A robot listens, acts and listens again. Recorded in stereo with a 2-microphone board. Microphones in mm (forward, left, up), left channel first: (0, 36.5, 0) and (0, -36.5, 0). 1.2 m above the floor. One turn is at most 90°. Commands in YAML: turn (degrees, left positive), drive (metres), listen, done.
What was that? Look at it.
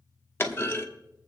turn: 30
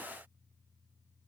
listen: true
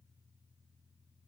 done: "I heard a clunk, but can't make it out now. It was about straight ahead or 120° left."